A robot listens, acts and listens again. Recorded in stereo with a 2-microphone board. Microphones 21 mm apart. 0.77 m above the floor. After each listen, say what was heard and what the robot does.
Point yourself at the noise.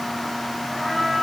Turn 30° left.
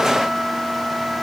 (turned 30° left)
So it is at 30° right. Turn 30° right.
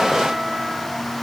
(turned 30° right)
Facing the trumpet.